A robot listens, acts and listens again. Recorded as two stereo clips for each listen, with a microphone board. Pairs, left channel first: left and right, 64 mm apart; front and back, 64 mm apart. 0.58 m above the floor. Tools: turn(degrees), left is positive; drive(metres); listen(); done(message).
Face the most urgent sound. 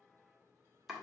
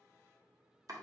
listen()
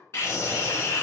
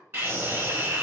turn(degrees=135)
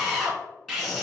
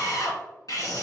turn(degrees=10)
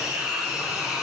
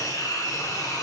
done("Facing the scream, 1 to 2 m away.")